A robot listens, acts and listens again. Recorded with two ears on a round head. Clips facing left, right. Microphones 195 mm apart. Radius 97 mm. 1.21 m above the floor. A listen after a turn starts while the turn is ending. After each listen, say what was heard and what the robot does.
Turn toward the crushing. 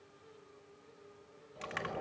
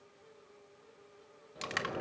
The crushing: about 55° right or 125° right. Turn 55° right.
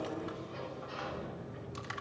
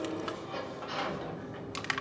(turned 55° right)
So it is at 75° right. Turn 75° right.
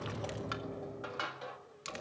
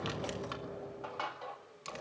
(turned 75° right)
The crushing is now 20° left. Turn 20° left.
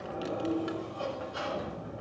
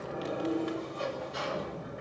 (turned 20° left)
Keep listening.
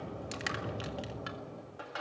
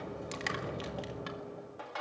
Facing the crushing, 1 to 2 m away.